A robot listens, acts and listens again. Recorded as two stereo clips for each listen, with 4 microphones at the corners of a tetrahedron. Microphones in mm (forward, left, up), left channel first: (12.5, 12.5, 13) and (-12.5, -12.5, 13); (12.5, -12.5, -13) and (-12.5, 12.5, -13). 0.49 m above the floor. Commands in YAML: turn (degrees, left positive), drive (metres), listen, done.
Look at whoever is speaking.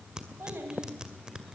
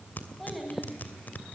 turn: -140
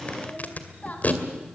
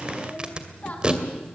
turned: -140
done: "Found it: a child speaking, straight ahead."